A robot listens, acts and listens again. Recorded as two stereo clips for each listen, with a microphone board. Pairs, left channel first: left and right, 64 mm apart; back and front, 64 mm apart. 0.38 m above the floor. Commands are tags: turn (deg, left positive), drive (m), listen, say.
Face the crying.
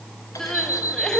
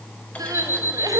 <turn deg="10"/>
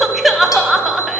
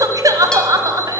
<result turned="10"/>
<say>Facing the crying.</say>